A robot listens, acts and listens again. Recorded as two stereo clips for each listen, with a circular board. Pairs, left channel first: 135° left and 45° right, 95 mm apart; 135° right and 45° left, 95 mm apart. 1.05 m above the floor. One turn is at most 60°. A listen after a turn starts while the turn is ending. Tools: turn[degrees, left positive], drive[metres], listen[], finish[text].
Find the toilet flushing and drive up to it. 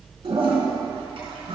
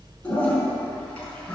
Thought: The toilet flushing: 60° right.
Action: turn[-60]
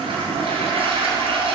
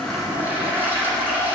Thought: The toilet flushing is now 25° right.
Action: turn[-25]
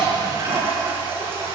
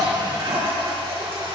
Thought: The toilet flushing is now 20° left.
Action: turn[20]
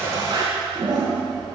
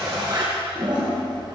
Action: drive[1.0]
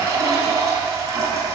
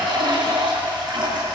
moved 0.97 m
Action: drive[1.0]
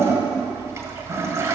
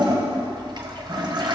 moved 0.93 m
Thought: The toilet flushing is now 15° left.
Action: turn[15]
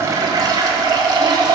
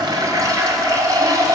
Action: drive[1.0]
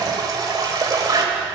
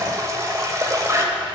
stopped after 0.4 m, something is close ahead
Action: finish[Arrived at the toilet flushing, straight ahead.]